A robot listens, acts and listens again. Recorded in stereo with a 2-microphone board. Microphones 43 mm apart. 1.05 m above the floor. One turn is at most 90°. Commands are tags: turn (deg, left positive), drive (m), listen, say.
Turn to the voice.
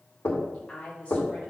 <turn deg="30"/>
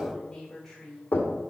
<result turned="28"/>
<turn deg="10"/>
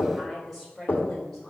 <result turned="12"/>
<say>Found it: a woman speaking, straight ahead.</say>